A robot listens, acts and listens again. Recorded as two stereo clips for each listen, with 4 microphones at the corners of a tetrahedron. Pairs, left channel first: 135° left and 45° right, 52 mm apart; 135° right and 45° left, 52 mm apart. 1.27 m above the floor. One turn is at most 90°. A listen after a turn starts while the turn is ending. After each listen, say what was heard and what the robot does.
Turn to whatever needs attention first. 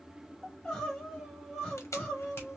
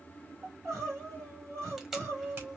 The crying: 60° left. Turn 60° left.
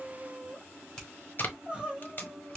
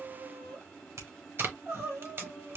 The crying is now 20° left. Turn 20° left.
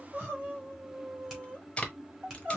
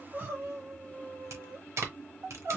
Facing the crying, 2 to 4 m away.